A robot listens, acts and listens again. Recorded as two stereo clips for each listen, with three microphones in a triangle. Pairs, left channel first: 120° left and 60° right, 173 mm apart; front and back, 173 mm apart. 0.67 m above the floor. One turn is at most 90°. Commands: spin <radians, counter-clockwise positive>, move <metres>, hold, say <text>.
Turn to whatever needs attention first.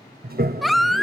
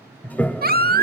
spin -1.57
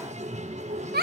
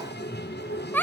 spin -1.40
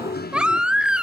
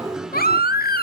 spin 0.44
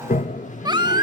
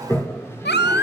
say Facing the baby crying.